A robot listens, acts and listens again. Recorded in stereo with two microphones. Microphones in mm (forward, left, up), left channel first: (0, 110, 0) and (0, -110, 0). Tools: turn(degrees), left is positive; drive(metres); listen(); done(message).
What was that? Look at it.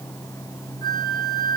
turn(degrees=20)
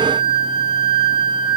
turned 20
turn(degrees=145)
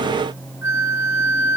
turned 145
turn(degrees=55)
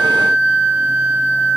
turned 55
done("Facing the flute, 2 to 4 m away.")